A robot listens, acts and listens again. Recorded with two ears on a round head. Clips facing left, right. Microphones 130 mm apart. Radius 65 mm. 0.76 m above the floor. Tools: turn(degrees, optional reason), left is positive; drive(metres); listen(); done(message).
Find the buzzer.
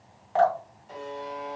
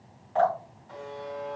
turn(degrees=30, reason="The buzzer: about 30° left or 150° left.")
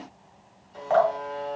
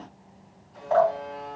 turn(degrees=115, reason="So it is at 115° left.")
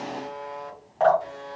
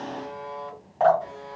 turn(degrees=30, reason="The buzzer is now 30° left.")
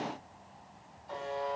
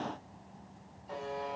done("Found it: a buzzer, straight ahead, 1 to 2 m away.")